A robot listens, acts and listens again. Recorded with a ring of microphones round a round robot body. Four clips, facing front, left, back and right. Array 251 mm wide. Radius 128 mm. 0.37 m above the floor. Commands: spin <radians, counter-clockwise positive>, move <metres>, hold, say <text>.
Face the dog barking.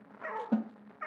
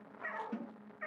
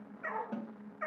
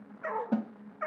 spin -1.66
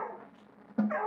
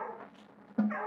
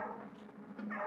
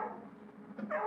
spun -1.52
spin -0.26
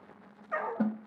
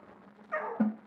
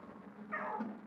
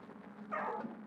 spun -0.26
say Found it: a dog barking, straight ahead, over 4 m away.